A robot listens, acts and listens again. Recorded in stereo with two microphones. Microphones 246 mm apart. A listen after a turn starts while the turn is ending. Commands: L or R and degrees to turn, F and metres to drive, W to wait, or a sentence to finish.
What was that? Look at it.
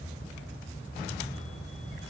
W
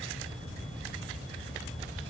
W
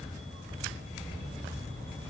I can't make out anything.